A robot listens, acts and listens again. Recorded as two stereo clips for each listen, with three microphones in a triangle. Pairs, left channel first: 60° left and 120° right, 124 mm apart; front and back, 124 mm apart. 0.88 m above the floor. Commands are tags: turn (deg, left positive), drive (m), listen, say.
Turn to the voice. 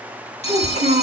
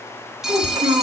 <turn deg="-130"/>
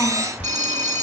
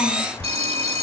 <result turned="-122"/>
<turn deg="-10"/>
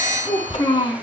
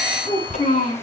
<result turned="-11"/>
<say>Found it: a child speaking, straight ahead, over 4 m away.</say>